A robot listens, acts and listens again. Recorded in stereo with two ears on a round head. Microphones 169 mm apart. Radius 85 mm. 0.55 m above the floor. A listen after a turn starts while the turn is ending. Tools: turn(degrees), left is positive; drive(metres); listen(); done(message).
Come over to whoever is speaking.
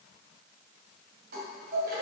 listen()
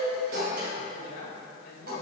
turn(degrees=50)
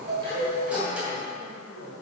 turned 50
turn(degrees=75)
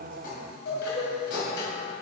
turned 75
listen()
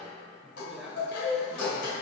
drive(metres=1.0)
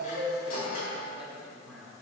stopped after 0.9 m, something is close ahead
done("Arrived at the man speaking, straight ahead.")